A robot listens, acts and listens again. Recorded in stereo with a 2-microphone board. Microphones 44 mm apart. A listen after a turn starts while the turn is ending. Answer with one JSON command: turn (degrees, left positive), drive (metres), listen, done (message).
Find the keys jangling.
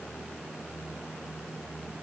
{"listen": true}
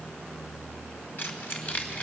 {"turn": 40}
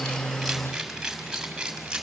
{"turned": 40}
{"turn": -15}
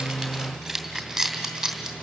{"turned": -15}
{"done": "Facing the keys jangling, 2 to 4 m away."}